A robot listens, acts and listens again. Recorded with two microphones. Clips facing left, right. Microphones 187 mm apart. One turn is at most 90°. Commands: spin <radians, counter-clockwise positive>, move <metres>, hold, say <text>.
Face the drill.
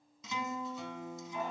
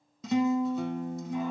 hold
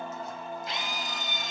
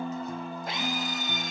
spin -0.96
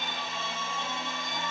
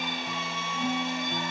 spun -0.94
spin -0.35
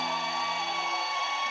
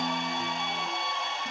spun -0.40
say Facing the drill, 2 to 4 m away.